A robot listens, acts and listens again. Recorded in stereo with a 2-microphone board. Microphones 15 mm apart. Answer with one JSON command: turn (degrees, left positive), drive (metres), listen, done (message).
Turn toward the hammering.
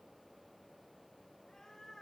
{"listen": true}
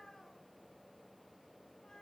{"listen": true}
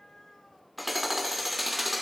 {"turn": -30}
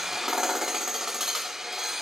{"turn": -150}
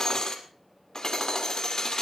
{"turn": 50}
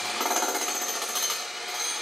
{"done": "Found it: hammering, straight ahead."}